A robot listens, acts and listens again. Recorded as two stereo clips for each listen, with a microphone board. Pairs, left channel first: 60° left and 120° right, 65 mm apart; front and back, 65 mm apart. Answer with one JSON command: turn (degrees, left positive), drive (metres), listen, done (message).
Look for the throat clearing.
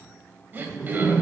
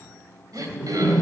{"turn": -175}
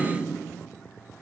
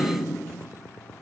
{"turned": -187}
{"turn": 10}
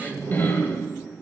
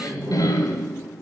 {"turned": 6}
{"done": "Facing the throat clearing, 2 to 4 m away."}